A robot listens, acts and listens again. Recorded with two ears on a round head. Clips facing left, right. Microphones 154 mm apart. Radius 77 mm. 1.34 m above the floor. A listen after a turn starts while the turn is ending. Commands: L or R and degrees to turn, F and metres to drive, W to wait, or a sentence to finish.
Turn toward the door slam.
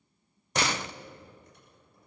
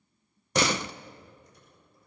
R90
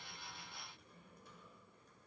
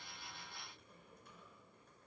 Facing where the door slam came from. I can't hear it now.